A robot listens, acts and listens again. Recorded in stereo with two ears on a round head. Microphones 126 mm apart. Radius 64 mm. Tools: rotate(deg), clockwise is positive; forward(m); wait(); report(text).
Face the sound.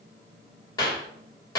rotate(-30)
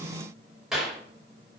report("Facing the clap.")